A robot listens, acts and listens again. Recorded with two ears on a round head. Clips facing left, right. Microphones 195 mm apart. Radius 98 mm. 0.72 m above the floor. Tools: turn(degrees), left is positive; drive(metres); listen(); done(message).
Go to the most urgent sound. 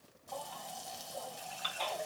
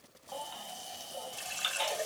turn(degrees=-40)
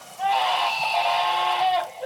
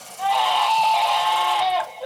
drive(metres=1.0)
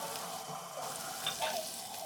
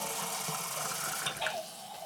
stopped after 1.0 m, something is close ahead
done("Blocked. The baby crying is further on, straight ahead.")